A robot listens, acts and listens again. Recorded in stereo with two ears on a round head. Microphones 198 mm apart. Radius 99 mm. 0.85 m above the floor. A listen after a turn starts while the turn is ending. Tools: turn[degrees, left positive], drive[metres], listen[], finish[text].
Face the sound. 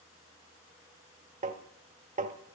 Thought: The tapping: about 35° right or 145° right.
Action: turn[-35]
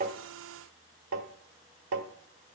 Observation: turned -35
Thought: So it is at 115° right.
Action: turn[-115]
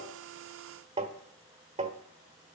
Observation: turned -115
Thought: The tapping is now 25° right.
Action: turn[-25]
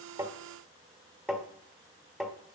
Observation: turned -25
Action: finish[Found it: tapping, straight ahead, 1 to 2 m away.]